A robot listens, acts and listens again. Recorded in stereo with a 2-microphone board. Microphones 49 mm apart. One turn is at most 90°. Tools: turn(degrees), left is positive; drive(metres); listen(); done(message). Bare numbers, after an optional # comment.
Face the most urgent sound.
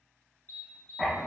# The alarm: about 45° left or 135° left.
turn(45)
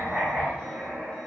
listen()
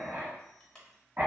# So it is at 15° left.
turn(15)
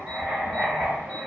listen()
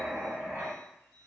listen()
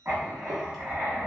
done("I heard an alarm from this way, but can't make it out now.")